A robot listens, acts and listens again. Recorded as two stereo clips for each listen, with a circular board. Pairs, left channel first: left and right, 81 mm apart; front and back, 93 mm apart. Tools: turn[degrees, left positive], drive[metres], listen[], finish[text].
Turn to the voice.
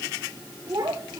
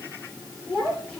Thought: The child speaking: 80° right.
Action: turn[-80]
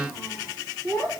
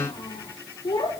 Thought: The child speaking is now 10° left.
Action: turn[10]
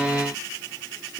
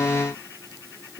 Action: finish[Found it: a child speaking, straight ahead.]